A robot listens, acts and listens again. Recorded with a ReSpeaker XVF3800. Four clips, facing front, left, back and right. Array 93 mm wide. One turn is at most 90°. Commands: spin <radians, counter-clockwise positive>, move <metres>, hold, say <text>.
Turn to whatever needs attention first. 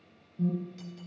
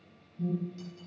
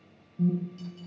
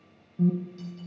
spin -1.57
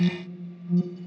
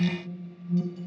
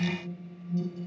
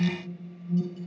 say Facing the alarm, 2 to 4 m away.